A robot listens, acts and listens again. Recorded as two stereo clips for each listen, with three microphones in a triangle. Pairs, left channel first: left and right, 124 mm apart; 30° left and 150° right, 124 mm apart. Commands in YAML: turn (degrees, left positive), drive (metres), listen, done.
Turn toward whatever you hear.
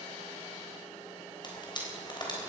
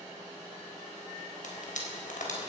turn: 40
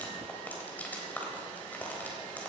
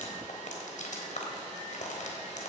turn: 15
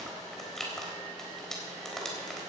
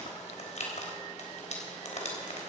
done: "Found it: frying, straight ahead, 2 to 4 m away."